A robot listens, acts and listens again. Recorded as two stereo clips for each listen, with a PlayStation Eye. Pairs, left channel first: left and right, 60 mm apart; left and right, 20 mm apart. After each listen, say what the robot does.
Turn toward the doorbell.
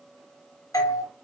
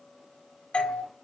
Turn 65° left.
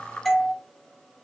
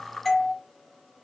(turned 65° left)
Facing the doorbell, under 1 m away.